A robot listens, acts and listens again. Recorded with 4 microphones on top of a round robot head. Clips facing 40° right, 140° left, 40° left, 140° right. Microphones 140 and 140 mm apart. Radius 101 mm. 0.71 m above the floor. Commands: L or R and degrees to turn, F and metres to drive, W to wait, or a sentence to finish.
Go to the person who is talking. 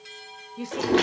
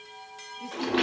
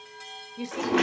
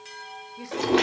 R30
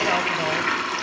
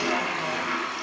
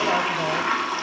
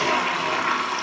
W
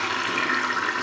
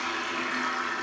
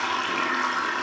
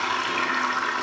W
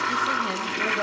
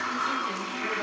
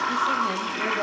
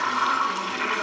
I heard a woman speaking from this way, but can't make it out now. I did not reach it.